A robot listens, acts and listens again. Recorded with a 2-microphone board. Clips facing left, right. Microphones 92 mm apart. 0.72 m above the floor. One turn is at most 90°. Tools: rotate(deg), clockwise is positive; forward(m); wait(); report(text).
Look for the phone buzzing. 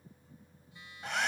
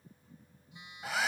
rotate(20)
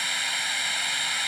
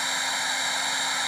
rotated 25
wait()
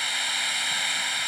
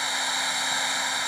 wait()
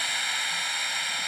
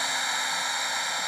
report("I heard a phone buzzing, but can't make it out now. It was about 5° left or 135° right.")